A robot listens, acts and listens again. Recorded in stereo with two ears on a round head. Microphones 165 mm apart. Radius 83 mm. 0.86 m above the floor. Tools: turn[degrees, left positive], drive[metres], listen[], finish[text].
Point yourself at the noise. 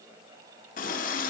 Thought: The running tap: about 45° left or 135° left.
Action: turn[45]
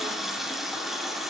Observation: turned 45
Action: finish[Found it: a running tap, straight ahead.]